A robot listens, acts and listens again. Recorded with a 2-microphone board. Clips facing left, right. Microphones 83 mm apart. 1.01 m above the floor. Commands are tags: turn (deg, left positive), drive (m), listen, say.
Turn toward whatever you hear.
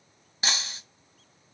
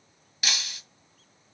<turn deg="30"/>
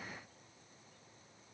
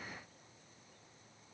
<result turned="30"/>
<listen/>
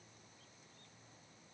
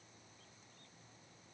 <say>I heard breaking glass, but can't make it out now. It was about straight ahead or 120° left.</say>